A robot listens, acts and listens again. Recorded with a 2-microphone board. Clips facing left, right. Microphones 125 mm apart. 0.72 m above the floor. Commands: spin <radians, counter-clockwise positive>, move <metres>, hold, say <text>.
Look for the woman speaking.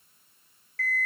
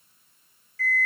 hold
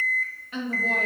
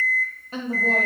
spin -0.61
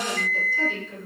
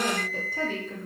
spin -0.79
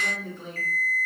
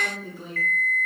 say Found it: a woman speaking, straight ahead, 1 to 2 m away.